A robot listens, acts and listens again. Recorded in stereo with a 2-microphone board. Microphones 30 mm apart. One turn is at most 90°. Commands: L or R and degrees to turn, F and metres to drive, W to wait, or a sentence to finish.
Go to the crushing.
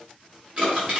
R35
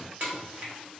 R90
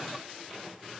R15
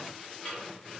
L20
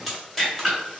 F1.0
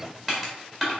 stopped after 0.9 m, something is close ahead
Arrived at the crushing, straight ahead.